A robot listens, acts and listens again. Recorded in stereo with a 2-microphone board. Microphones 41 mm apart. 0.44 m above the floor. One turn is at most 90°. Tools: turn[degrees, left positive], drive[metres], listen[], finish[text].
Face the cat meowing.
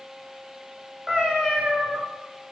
Thought: The cat meowing: about 15° right or 165° right.
Action: turn[-15]
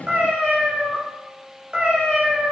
Thought: So it is at 150° right.
Action: turn[-90]
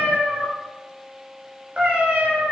Thought: The cat meowing is now 30° right.
Action: turn[-30]
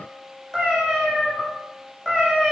Thought: The cat meowing is now 10° left.
Action: turn[10]
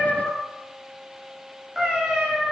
Action: finish[Facing the cat meowing.]